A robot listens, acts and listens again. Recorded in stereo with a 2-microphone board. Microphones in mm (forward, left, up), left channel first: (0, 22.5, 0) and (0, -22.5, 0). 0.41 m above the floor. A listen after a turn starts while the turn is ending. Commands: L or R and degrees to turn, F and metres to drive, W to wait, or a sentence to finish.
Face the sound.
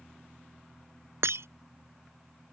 R70
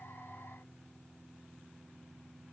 W
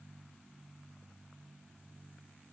I heard breaking glass, but can't make it out now. It was about straight ahead or 40° right.